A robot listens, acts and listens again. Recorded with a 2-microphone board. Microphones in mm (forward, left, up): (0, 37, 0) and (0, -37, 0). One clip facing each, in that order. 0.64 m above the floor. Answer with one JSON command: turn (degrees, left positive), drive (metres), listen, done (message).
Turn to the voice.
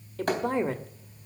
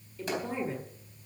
{"turn": 75}
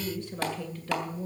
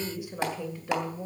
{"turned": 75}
{"turn": -20}
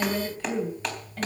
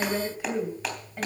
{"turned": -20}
{"turn": -15}
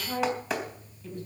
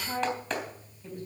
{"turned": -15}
{"turn": -15}
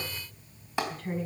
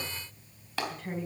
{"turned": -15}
{"done": "Found it: a woman speaking, straight ahead."}